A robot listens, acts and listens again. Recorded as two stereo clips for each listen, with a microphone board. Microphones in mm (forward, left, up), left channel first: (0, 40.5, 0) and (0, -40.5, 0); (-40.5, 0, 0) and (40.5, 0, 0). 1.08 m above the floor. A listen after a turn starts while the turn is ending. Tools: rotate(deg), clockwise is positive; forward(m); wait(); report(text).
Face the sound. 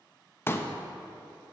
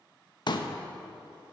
rotate(-150)
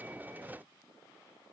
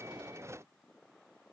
report("Facing where the pop came from. I can't hear it now.")